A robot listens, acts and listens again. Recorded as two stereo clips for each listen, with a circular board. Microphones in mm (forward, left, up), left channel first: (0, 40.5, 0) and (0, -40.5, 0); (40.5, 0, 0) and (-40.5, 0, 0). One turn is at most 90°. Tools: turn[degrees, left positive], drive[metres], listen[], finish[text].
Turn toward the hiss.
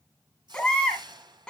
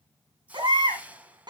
Thought: The hiss: 110° right.
Action: turn[-90]
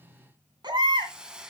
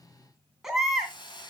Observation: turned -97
Thought: The hiss is now 10° right.
Action: turn[-10]
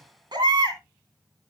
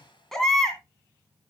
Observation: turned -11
Action: listen[]
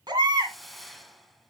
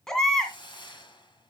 Action: finish[Found it: a hiss, straight ahead, 1 to 2 m away.]